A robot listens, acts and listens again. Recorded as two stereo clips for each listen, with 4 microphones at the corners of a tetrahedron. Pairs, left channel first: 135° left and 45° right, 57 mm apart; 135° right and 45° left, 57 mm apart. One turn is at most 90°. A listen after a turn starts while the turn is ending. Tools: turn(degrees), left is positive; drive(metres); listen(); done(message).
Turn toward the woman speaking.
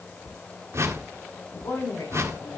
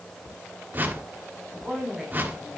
turn(degrees=90)
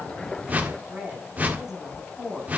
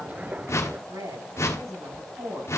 turn(degrees=40)
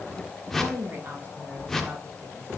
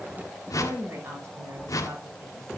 turn(degrees=10)
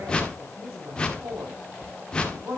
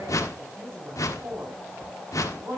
done("Found it: a woman speaking, straight ahead, over 4 m away.")